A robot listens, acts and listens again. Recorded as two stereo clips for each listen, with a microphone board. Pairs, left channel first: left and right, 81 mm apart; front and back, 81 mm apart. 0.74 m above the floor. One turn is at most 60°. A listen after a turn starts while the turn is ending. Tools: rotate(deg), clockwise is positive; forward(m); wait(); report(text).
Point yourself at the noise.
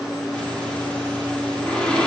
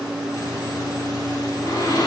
rotate(-15)
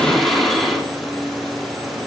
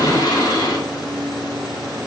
report("Facing the breathing, 2 to 4 m away.")